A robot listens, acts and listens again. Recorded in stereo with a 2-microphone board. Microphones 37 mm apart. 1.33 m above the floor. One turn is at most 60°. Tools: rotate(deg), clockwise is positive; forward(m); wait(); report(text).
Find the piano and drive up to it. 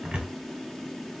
wait()
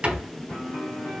rotate(-35)
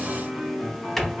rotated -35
rotate(-10)
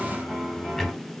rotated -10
forward(1.0)
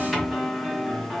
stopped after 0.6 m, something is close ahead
report("I am next to the piano.")